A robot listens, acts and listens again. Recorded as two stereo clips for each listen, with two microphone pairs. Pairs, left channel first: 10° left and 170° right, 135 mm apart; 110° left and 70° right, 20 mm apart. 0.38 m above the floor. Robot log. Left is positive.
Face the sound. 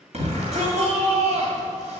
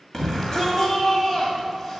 note: The shout: 170° left.
cmd yaw +170
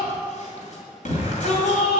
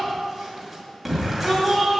end: Found it: a shout, straight ahead, 2 to 4 m away.